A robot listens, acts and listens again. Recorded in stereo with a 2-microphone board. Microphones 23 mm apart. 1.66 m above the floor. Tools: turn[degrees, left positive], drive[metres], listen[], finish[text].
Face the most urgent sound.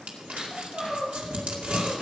Thought: The crying: about 25° right or 155° right.
Action: turn[-25]
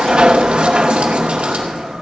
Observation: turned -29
Action: listen[]
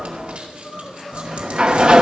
Action: finish[Facing the crying.]